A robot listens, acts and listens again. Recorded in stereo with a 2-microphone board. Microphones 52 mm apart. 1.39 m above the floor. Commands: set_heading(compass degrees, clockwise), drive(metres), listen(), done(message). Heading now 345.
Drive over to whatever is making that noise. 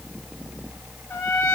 set_heading(275)
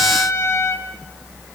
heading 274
set_heading(234)
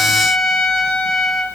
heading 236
drive(1.0)
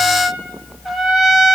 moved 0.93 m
drive(1.0)
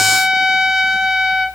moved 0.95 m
drive(1.0)
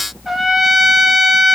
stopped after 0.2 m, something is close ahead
done("I am next to the trumpet.")